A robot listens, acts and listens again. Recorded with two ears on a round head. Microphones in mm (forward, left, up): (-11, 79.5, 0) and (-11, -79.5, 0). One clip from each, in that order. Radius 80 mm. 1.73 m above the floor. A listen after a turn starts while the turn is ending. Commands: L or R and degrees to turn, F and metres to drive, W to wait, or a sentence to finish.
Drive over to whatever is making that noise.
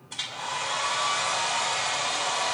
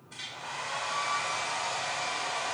L35
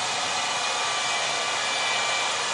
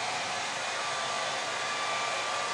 L105
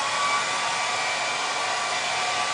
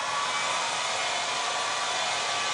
F1.0
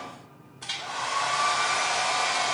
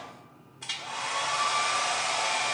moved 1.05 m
F1.0
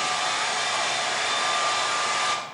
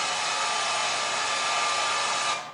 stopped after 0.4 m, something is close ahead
R10
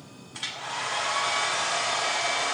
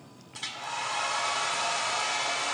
I am next to the hair dryer.